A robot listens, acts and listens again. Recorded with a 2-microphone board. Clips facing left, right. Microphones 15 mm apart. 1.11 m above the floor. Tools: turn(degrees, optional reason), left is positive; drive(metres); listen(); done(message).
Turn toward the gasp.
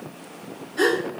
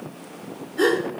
turn(degrees=65, reason="The gasp: about 65° left or 115° left.")
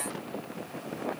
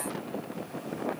listen()
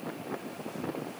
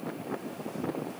done("I heard a gasp, but can't make it out now. It was about straight ahead or 50° left.")